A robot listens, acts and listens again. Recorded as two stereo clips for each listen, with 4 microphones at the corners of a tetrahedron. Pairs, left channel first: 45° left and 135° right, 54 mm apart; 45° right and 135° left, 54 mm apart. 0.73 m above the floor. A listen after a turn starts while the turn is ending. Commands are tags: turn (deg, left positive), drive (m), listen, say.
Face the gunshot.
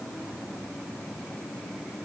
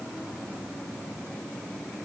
<listen/>
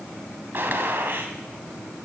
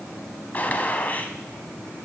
<turn deg="-100"/>
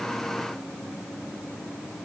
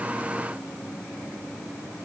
<say>I heard a gunshot from this way, but can't make it out now.</say>